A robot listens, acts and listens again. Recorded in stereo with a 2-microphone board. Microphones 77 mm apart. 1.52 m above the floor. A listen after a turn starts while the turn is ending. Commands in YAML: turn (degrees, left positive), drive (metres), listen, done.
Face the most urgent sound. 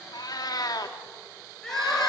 turn: 30
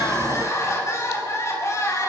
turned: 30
turn: 145
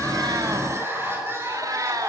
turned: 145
turn: -30
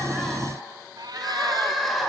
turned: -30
done: "Facing the crying."